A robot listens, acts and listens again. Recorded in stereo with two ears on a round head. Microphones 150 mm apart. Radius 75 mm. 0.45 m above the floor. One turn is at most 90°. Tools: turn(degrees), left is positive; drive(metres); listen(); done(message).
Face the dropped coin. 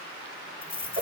turn(degrees=30)
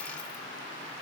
listen()
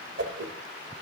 done("I heard a dropped coin, but can't make it out now. It was about 25° right or 145° left.")